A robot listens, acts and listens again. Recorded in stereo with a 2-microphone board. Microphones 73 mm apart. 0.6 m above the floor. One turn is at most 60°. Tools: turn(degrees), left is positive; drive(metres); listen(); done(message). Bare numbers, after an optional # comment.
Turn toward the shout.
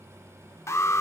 listen()
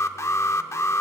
listen()
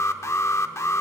done("I can't make out a shout, only an alarm.")